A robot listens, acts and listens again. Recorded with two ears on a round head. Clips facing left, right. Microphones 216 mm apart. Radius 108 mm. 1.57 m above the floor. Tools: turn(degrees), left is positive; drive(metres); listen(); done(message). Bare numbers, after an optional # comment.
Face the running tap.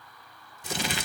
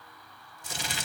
listen()
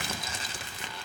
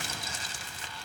listen()
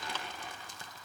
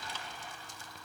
done("I can't make out a running tap to turn to.")